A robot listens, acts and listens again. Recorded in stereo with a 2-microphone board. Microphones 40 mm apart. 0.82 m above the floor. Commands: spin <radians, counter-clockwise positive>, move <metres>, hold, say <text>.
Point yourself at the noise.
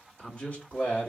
spin 0.79
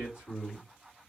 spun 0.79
spin 1.13
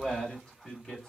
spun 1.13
spin 0.17
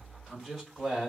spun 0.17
say Found it: a man speaking, straight ahead, 2 to 4 m away.